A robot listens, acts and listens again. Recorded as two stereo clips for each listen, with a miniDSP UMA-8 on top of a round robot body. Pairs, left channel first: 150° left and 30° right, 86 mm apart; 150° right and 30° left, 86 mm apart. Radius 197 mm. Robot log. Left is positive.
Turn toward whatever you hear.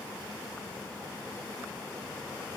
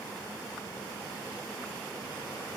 cmd idle
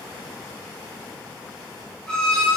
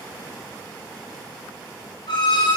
note: The violin: 130° right.
cmd yaw -130
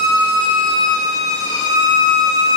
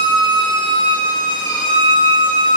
note: The violin is now 15° left.
cmd yaw +15
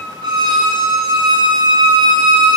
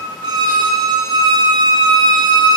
end: Facing the violin.